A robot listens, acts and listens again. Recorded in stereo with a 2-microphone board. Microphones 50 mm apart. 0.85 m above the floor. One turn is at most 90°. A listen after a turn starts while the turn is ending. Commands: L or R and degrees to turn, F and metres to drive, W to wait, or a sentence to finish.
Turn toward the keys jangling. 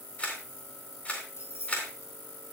L70
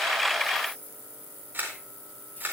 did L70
W
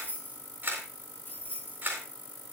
L40
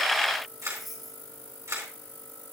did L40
Found it: keys jangling, straight ahead, over 4 m away.